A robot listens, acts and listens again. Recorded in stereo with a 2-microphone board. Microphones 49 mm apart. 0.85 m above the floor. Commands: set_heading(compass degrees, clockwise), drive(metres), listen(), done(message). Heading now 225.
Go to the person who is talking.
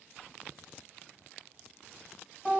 listen()
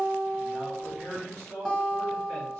set_heading(290)
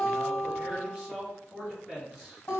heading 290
set_heading(300)
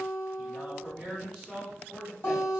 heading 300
drive(1.0)
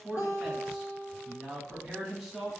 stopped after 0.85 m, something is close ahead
done("I am next to the man speaking.")